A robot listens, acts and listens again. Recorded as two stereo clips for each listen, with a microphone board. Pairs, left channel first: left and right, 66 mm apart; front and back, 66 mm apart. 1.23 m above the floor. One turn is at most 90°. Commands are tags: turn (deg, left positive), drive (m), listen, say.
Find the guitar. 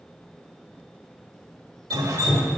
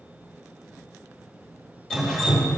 <listen/>
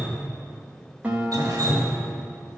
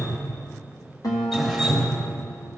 <turn deg="-20"/>
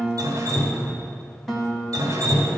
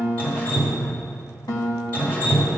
<say>Facing the guitar, 1 to 2 m away.</say>